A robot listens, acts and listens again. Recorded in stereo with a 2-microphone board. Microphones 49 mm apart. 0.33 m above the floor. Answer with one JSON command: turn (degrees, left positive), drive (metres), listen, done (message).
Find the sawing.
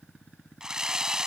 {"turn": -30}
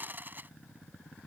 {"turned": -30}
{"turn": -135}
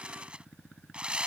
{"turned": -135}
{"turn": -25}
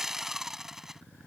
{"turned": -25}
{"turn": -10}
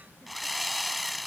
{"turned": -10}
{"done": "Found it: sawing, straight ahead."}